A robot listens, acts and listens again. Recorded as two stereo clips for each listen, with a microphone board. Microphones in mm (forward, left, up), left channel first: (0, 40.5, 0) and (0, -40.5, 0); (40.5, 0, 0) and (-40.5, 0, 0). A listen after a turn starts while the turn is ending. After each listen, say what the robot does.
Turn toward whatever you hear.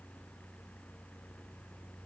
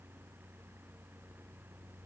Keep listening.
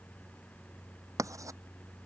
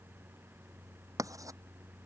Turn 135° right.
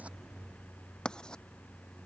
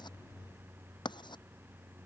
Turn 10° left.
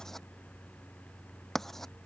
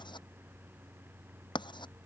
Found it: writing, straight ahead.